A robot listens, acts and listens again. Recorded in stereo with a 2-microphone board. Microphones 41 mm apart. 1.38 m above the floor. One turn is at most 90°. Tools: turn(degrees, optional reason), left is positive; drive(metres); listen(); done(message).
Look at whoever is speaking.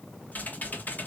listen()
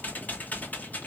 listen()
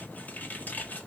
done("I can't make out anyone speaking, only typing on a keyboard.")